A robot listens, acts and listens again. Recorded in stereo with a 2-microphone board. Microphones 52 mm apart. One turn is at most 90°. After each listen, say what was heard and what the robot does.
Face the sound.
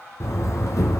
The door slam: about 70° left or 110° left. Turn 70° left.
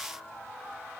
Keep listening.
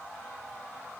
I heard a door slam, but can't make it out now. It was about straight ahead or 40° left.